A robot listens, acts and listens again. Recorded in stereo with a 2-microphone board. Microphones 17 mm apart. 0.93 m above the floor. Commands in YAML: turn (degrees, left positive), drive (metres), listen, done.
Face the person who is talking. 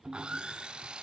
listen: true
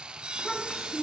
turn: 20
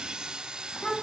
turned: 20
turn: 135
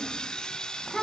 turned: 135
turn: 25
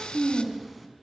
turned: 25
done: "Found it: a child speaking, straight ahead, over 4 m away."